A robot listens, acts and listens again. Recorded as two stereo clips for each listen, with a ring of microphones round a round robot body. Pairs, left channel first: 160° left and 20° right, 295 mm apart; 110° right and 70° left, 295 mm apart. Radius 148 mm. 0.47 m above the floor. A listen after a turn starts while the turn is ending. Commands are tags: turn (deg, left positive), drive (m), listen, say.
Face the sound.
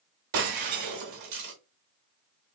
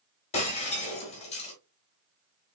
<turn deg="-45"/>
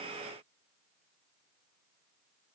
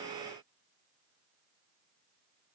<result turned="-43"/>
<say>Facing where the breaking glass came from. I can't hear it now.</say>